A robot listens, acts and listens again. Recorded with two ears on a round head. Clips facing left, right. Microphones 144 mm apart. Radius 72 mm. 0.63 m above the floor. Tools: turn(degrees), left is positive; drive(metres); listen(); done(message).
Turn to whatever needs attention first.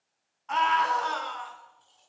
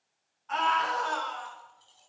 turn(degrees=90)
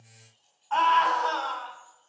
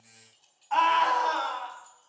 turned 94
turn(degrees=-10)
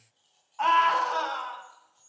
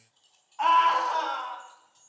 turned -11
done("Found it: a scream, straight ahead, over 4 m away.")